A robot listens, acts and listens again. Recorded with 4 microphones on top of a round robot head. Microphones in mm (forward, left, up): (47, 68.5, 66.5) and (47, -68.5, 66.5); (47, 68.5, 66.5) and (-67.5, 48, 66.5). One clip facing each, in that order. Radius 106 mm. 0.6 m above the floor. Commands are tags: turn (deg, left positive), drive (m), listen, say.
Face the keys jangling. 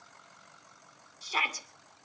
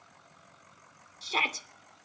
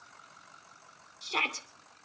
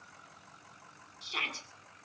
<listen/>
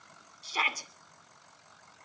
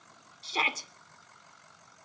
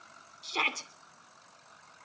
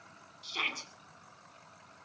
<listen/>
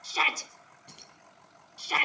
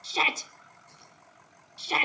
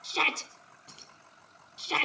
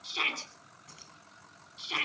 <turn deg="75"/>
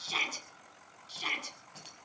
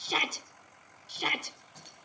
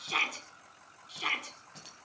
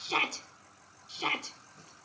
<turn deg="10"/>
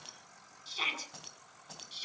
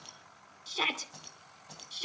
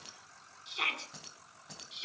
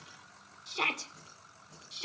<say>Facing the keys jangling.</say>